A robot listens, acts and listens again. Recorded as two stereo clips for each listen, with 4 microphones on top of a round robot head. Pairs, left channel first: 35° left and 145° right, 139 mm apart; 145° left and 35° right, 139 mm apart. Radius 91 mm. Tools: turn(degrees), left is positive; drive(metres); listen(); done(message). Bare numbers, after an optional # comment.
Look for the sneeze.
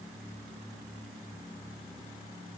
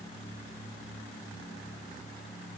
listen()
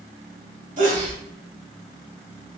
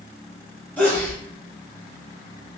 # The sneeze: 140° right.
turn(-140)
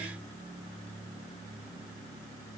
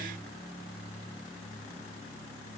done("Facing where the sneeze came from. I can't hear it now.")